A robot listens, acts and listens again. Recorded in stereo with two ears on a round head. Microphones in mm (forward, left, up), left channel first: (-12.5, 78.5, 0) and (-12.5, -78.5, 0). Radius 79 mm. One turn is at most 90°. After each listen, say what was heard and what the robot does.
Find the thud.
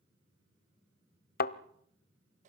The thud: about 55° left or 125° left. Turn 55° left.
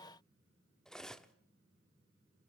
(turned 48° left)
Keep listening.
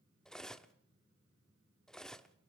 I heard a thud, but can't make it out now. It was about 10° left or 75° left.